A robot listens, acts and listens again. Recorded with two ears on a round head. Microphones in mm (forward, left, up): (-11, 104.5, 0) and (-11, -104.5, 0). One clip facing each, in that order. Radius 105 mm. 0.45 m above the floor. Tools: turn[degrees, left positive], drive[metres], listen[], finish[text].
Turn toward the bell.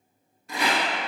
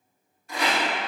Action: listen[]
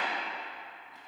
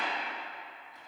Action: listen[]
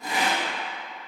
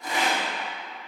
Action: finish[I can't make out a bell, only a rattle.]